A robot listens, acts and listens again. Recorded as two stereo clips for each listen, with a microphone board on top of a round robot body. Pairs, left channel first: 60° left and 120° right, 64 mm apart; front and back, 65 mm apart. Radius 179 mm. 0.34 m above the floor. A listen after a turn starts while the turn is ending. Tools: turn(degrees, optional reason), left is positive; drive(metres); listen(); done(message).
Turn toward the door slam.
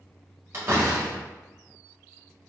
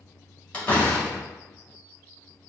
turn(degrees=-70, reason="The door slam: 70° right.")
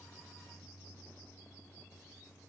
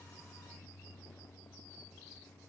done("Facing where the door slam came from. I can't hear it now.")